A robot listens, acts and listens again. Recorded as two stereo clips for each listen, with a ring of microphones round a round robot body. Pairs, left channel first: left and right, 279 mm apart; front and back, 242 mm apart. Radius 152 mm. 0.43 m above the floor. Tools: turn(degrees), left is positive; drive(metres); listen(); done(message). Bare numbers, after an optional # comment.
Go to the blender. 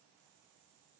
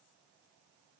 listen()
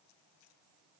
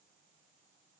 listen()
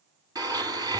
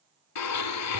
# The blender: 15° right.
turn(-15)
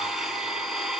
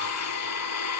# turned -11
drive(1.0)
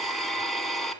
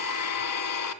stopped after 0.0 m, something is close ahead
done("Something is in my way. I am facing the blender but have not reached it.")